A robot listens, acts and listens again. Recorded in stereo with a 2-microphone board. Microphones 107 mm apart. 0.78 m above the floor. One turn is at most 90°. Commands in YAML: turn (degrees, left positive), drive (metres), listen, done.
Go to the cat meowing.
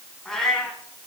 turn: 30
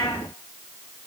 turn: 90
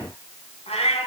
turn: 80
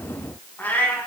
turn: 15
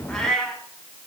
drive: 1.0
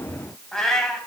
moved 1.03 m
drive: 1.0
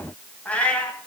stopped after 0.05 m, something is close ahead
turn: 10
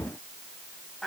done: "Something is in my way. I am facing the cat meowing but have not reached it."